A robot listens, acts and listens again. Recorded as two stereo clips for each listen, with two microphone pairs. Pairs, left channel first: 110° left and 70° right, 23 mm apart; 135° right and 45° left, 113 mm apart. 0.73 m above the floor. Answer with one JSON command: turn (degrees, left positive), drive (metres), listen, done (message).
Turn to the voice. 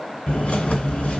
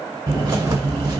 {"listen": true}
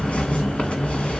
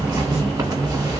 {"listen": true}
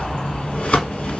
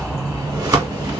{"done": "I can't make out anyone speaking to turn to."}